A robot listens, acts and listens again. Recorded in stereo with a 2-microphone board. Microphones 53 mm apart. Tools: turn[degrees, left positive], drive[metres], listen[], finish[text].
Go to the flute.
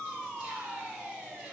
Action: listen[]
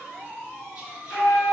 Thought: The flute: about 55° left or 125° left.
Action: turn[55]
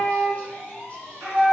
Action: drive[1.0]
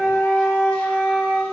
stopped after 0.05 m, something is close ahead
Action: finish[Blocked. The flute is further on, straight ahead.]